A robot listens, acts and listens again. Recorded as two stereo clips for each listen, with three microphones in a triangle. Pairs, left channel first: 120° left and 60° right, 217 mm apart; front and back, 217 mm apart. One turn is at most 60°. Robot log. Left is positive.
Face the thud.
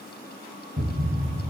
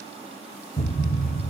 note: The thud: 55° right.
cmd yaw -55
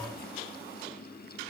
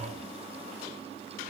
end: I heard a thud from this way, but can't make it out now.